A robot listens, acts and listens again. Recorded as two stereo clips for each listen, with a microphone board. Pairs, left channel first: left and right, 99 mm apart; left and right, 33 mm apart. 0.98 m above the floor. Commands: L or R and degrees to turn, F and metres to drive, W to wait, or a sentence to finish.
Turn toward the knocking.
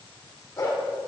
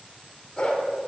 W
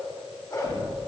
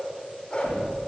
L90
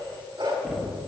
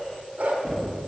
Found it: knocking, straight ahead.